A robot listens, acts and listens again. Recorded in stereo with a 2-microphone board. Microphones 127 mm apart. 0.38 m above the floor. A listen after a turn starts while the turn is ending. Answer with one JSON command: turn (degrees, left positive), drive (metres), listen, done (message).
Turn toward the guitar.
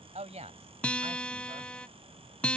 {"turn": 30}
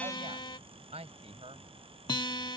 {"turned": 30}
{"turn": 140}
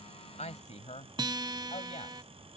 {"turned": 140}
{"turn": -35}
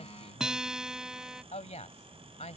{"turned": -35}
{"done": "Found it: a guitar, straight ahead."}